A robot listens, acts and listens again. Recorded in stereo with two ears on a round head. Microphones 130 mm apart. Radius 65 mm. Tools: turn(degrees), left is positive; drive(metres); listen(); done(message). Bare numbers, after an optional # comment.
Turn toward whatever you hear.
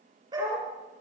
# The dog barking: about 30° right or 150° right.
turn(-30)
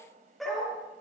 done("Found it: a dog barking, straight ahead, over 4 m away.")